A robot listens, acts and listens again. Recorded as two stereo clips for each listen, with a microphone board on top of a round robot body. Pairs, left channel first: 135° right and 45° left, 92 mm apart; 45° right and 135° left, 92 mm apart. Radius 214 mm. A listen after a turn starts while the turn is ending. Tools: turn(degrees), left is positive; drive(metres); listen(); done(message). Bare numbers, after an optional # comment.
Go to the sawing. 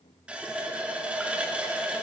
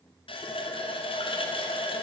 listen()
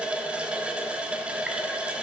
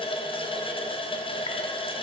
listen()
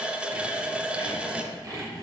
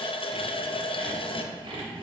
# The sawing: 100° left.
turn(100)
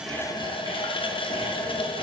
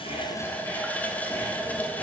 listen()
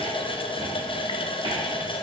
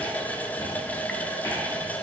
# The sawing is now 10° left.
turn(10)
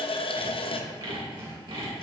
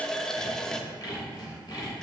drive(1.0)
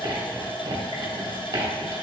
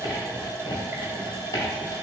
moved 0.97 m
drive(1.0)
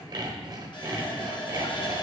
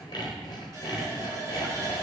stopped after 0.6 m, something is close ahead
done("I am next to the sawing.")